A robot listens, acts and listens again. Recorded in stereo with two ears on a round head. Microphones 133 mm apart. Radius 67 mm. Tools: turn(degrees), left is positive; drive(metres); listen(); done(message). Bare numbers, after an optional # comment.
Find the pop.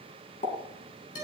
# The pop: about 50° left or 130° left.
turn(50)
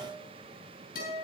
listen()
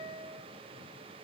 done("I heard a pop, but can't make it out now. It was about straight ahead or 80° left.")